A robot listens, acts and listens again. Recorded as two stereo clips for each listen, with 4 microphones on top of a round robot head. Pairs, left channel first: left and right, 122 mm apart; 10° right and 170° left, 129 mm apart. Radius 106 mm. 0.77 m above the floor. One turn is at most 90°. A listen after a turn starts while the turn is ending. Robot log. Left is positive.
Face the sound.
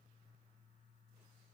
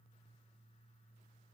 cmd idle
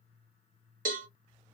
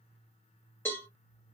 note: The cowbell: 85° right.
cmd yaw -85
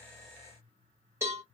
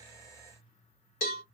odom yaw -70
note: The cowbell is now 15° right.
cmd yaw -15
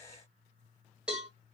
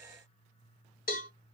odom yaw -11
end: Found it: a cowbell, straight ahead, 1 to 2 m away.